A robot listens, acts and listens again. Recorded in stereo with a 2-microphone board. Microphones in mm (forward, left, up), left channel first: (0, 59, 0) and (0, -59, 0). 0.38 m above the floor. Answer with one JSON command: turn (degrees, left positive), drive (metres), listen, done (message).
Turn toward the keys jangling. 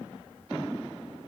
{"listen": true}
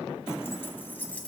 {"turn": 30}
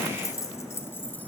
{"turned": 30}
{"turn": 15}
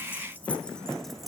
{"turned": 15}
{"turn": 30}
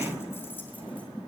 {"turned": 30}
{"listen": true}
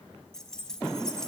{"turn": 30}
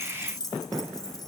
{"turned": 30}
{"turn": 145}
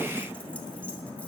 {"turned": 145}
{"listen": true}
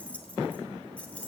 {"turn": 10}
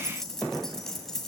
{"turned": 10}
{"done": "Facing the keys jangling."}